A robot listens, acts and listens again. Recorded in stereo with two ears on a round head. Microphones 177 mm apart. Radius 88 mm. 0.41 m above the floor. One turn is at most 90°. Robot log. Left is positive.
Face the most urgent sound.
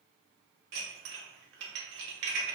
cmd idle
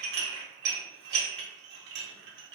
cmd idle
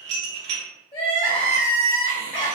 note: The crying: about 25° left or 155° left.
cmd yaw +25
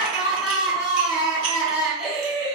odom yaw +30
end: Facing the crying.